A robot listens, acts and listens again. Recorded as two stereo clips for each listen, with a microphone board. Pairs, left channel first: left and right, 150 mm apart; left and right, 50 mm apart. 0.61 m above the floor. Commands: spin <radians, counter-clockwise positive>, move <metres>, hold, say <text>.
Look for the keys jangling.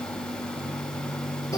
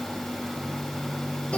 hold
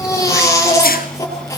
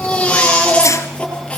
hold
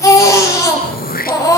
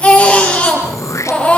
say I can't make out keys jangling, only throat clearing and a baby crying.